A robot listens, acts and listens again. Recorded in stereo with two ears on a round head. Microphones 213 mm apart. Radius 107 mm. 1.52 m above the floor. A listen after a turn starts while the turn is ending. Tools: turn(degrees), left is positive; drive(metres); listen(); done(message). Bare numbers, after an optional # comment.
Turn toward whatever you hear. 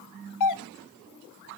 turn(90)
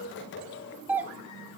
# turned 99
done("Facing the doorbell, under 1 m away.")